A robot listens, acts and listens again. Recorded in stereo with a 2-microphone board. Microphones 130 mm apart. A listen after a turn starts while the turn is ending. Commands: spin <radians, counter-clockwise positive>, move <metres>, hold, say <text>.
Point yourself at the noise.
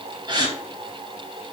spin -0.61
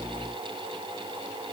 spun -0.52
hold
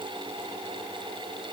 say I heard a gasp, but can't make it out now. It was about 5° right or 115° right.